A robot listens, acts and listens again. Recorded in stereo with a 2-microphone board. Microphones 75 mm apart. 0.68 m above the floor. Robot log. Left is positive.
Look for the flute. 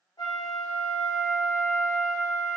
note: The flute: about 65° left or 115° left.
cmd yaw +65
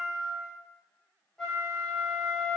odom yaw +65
end: Facing the flute, 1 to 2 m away.